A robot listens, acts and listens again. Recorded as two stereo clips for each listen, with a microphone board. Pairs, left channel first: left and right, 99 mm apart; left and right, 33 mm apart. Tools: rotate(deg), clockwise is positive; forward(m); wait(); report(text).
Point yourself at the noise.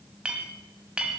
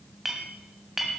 rotate(30)
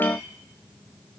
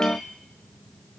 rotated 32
rotate(-20)
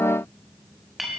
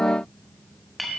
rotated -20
report("Facing the clink, 1 to 2 m away.")